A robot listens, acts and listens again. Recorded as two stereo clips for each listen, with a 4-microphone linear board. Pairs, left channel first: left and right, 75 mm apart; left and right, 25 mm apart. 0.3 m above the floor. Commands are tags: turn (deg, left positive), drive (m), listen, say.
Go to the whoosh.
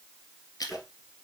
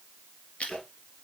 <turn deg="-30"/>
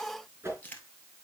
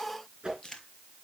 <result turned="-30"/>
<turn deg="-145"/>
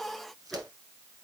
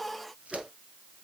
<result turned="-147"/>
<drive m="1.0"/>
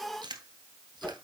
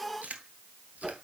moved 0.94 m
<turn deg="10"/>
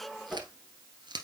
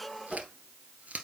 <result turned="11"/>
<drive m="1.0"/>
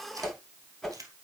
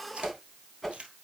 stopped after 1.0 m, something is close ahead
<say>I am next to the whoosh.</say>